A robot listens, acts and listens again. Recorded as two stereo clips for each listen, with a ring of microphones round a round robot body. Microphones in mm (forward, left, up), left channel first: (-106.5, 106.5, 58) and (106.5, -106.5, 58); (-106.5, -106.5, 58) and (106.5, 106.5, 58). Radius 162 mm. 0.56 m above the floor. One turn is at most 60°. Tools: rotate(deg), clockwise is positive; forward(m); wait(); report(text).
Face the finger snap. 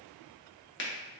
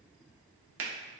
rotate(-60)
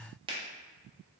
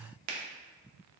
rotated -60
rotate(-25)
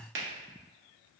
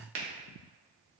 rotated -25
report("Found it: a finger snap, straight ahead.")